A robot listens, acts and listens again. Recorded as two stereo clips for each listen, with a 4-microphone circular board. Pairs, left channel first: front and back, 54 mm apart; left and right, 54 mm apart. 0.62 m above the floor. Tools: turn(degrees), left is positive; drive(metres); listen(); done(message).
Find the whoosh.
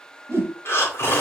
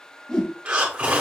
turn(degrees=160)
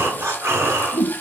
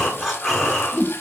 done("Found it: a whoosh, straight ahead.")